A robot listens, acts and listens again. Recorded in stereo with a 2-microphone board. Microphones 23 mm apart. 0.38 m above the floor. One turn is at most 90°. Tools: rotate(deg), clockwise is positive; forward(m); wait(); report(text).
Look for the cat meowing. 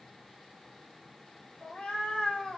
rotate(-50)
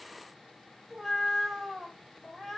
report("Facing the cat meowing.")